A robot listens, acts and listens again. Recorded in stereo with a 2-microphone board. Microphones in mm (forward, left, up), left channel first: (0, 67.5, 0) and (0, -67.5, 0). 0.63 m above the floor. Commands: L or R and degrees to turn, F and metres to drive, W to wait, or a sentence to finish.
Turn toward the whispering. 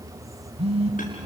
W
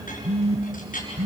W
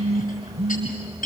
I can't make out whispering, only a phone buzzing and a clink.